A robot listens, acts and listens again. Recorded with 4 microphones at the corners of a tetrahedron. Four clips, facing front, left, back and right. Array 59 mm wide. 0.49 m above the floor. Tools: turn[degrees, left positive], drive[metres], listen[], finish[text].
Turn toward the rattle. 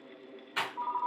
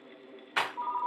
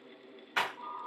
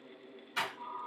Thought: The rattle: 120° left.
Action: turn[120]
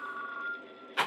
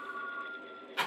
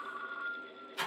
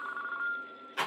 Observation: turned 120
Thought: The rattle is now 10° right.
Action: turn[-10]
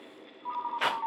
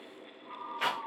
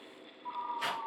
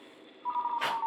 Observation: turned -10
Action: finish[Facing the rattle, under 1 m away.]